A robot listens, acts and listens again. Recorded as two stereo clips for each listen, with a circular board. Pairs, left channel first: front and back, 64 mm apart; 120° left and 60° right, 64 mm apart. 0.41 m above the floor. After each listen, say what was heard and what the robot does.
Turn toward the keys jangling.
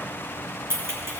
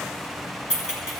The keys jangling: 135° right. Turn 135° right.
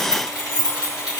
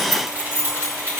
Facing the keys jangling, 2 to 4 m away.